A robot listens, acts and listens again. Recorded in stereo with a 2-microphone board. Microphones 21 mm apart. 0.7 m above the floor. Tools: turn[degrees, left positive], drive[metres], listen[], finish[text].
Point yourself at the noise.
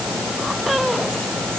Action: listen[]
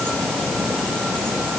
Action: listen[]
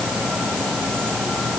Action: finish[I can't make out anything.]